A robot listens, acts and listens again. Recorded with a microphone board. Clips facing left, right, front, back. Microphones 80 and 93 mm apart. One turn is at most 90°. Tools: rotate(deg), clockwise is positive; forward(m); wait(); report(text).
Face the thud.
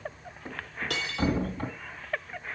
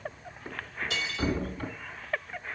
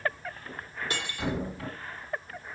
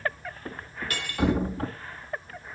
rotate(-90)
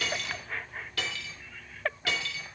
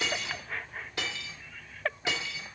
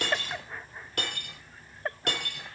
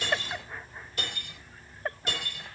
rotate(-45)
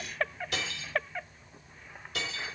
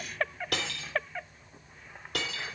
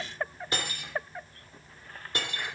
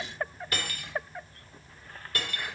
report("I heard a thud from this way, but can't make it out now.")